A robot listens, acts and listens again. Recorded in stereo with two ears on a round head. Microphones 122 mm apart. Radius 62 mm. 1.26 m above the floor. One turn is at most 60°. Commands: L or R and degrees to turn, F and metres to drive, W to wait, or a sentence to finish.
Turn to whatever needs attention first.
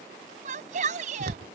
R55
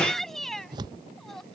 Facing the shout.